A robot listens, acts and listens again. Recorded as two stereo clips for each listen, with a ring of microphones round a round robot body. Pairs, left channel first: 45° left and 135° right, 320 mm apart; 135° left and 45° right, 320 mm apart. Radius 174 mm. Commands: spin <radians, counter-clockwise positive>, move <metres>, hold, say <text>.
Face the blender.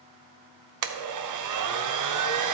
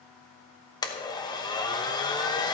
spin -2.62
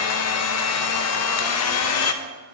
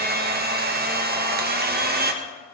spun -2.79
spin 0.17
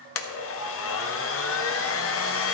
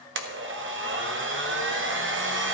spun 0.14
say Found it: a blender, straight ahead, 1 to 2 m away.